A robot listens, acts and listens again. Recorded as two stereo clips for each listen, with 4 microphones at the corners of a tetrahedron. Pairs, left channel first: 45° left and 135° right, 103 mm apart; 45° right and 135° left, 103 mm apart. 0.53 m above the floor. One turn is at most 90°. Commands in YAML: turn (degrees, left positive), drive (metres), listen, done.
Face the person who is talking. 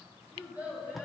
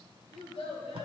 turn: -60
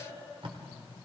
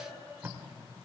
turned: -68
turn: 10
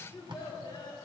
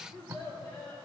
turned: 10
done: "Found it: a child speaking, straight ahead."